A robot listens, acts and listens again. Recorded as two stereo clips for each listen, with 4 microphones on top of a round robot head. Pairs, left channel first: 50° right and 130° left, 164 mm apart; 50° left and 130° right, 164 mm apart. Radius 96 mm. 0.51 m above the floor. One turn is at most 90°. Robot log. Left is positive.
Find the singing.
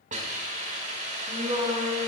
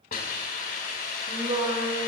note: The singing: straight behind.
cmd yaw +90
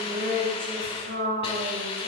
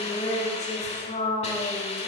note: The singing is now 100° left.
cmd yaw +90
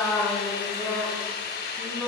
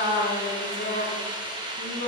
note: The singing is now 35° left.
cmd yaw +35
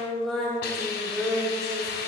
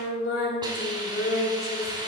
note: The singing is now 35° left.
cmd yaw +35
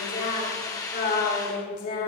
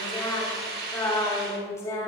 note: The singing is now 20° right.
cmd yaw -20
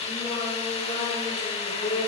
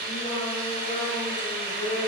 end: Found it: singing, straight ahead.